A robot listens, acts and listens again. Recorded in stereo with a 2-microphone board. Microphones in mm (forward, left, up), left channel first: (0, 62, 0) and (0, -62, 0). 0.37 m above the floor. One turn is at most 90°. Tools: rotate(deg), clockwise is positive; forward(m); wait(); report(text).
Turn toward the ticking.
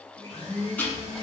rotate(-30)
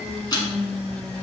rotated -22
rotate(-90)
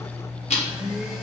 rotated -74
rotate(-70)
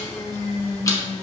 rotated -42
rotate(-30)
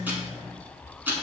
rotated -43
rotate(15)
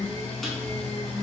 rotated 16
wait()
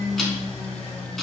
report("Found it: ticking, straight ahead, 1 to 2 m away.")